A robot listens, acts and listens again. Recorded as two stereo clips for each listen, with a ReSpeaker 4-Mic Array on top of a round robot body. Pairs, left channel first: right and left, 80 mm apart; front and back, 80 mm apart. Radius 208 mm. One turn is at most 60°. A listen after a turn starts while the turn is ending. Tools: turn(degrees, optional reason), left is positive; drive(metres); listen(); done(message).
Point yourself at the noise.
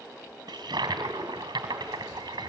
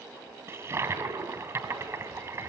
turn(degrees=60, reason="The toilet flushing: 125° left.")
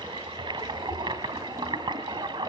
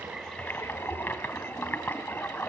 turn(degrees=60, reason="The toilet flushing is now 70° left.")
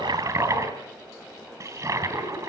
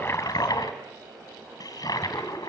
turn(degrees=40, reason="The toilet flushing is now 40° left.")
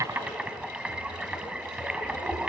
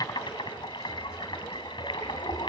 turn(degrees=15, reason="The toilet flushing is now 15° left.")
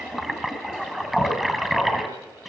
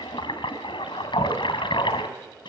done("Found it: a toilet flushing, straight ahead.")